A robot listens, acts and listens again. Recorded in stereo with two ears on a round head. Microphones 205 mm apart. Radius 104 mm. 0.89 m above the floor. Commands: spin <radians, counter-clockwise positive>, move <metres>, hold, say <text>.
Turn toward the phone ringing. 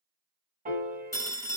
spin 0.26
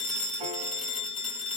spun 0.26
spin 2.62
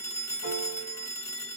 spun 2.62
spin 0.26
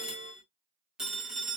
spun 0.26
say Facing the phone ringing.